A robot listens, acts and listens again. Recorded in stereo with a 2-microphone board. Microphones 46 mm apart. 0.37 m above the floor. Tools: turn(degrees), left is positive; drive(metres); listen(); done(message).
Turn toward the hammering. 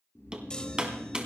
turn(degrees=-20)
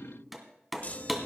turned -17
done("Facing the hammering, 1 to 2 m away.")